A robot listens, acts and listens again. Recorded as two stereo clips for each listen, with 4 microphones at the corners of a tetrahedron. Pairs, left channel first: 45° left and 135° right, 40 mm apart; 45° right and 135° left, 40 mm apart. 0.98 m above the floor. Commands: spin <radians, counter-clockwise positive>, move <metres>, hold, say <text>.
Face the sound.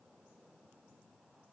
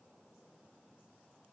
hold
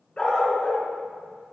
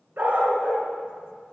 spin 1.83
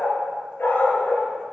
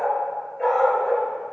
spin 0.52
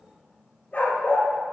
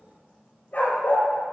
say Found it: a dog barking, straight ahead.